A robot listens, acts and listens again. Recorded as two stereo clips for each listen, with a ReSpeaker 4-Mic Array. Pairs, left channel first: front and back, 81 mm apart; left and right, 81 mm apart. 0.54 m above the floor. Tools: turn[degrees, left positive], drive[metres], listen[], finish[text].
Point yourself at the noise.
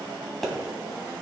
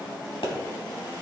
Thought: The pop: 85° left.
Action: turn[85]
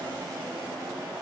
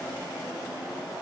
Action: finish[I heard a pop from this way, but can't make it out now.]